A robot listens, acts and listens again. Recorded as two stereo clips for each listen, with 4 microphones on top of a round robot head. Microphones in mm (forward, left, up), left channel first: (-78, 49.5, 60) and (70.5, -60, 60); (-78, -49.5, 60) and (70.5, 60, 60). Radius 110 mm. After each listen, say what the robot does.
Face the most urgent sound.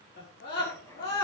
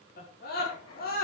Turn 175° left.
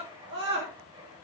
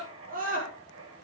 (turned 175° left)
Turn 10° right.
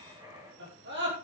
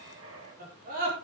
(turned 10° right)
Facing the scream.